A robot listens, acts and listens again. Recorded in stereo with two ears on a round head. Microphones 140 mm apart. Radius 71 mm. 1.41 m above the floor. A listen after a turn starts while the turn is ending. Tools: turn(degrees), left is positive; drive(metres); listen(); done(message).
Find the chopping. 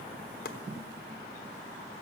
turn(degrees=70)
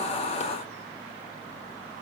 listen()
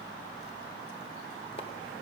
listen()
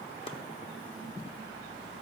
done("I heard chopping, but can't make it out now. It was about straight ahead or 40° left.")